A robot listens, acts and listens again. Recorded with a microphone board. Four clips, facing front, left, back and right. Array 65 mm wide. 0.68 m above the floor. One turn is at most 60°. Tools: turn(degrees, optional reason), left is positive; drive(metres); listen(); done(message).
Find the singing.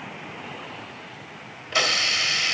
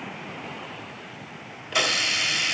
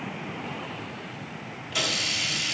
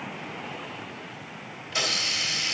listen()
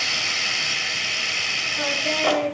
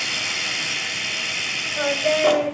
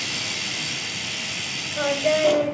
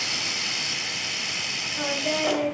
turn(degrees=60, reason="The singing: 135° left.")
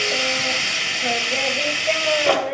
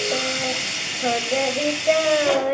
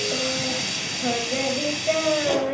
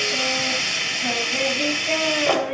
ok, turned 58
turn(degrees=60, reason="The singing is now 75° left.")
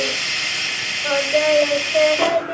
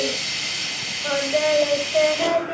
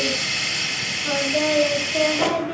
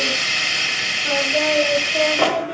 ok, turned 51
turn(degrees=25, reason="The singing is now 25° left.")
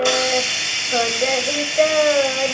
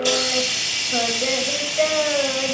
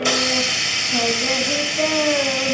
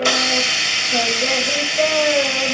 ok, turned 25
done("Facing the singing, 2 to 4 m away.")